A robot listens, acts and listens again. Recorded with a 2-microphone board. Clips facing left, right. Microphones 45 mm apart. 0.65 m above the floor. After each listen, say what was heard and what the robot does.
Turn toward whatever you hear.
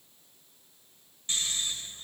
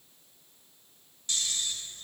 The snoring: about 30° left or 150° left. Turn 30° left.
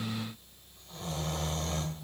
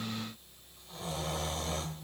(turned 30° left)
Found it: snoring, straight ahead, 1 to 2 m away.